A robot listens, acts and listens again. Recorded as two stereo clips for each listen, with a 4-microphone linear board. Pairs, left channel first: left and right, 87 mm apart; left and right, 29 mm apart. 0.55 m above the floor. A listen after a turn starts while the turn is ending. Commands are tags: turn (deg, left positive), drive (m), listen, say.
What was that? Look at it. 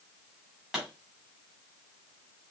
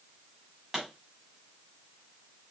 <turn deg="-30"/>
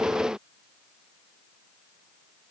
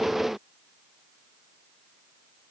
<listen/>
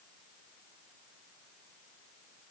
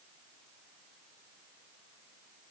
<say>I heard a pop, but can't make it out now. It was about 25° left or 145° right.</say>